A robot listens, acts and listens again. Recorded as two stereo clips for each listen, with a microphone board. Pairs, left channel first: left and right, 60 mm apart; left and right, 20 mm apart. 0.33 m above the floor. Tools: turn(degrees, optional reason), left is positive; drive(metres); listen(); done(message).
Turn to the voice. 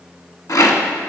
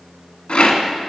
listen()
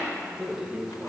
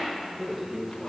turn(degrees=-30)
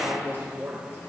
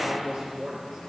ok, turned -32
turn(degrees=-145, reason="So it is at 145° right.")
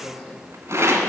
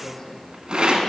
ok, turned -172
turn(degrees=25, reason="The man speaking is now 25° left.")
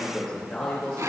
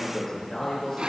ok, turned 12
turn(degrees=15, reason="The man speaking is now 15° left.")
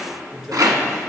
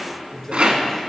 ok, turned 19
done("Facing the man speaking.")